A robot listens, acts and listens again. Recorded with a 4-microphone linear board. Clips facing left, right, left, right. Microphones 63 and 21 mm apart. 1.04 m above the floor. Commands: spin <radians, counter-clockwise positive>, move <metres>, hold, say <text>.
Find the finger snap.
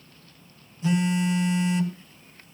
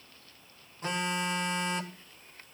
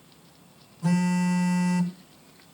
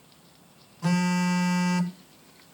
hold
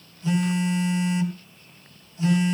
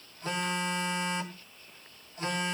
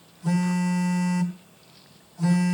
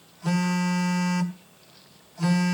hold
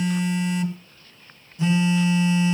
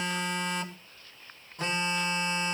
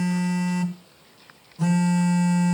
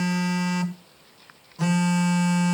say I can't make out a finger snap, only a phone buzzing.